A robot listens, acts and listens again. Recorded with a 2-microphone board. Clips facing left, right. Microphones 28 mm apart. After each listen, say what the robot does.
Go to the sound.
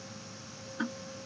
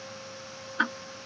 Turn 45° right.
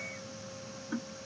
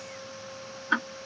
Turn 85° right.
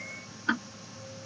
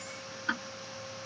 Turn 10° left.
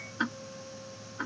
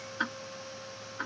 Drive 1.0 m forward.
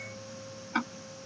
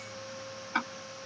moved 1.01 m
Drive 1.0 m forward.
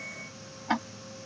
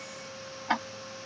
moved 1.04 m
Turn 10° right.
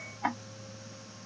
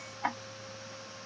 Drive 1.0 m forward.
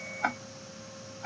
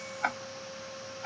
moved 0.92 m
Drive 1.0 m forward.
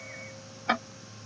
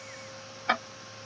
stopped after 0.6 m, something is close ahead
Turn 10° right.
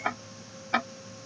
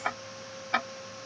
I am next to the ticking.